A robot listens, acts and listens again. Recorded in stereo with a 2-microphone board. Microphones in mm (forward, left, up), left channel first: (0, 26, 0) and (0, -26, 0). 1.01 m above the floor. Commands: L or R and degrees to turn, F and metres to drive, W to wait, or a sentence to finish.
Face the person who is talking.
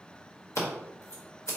W
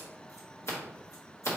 W
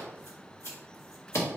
I can't make out anyone speaking, only scissors.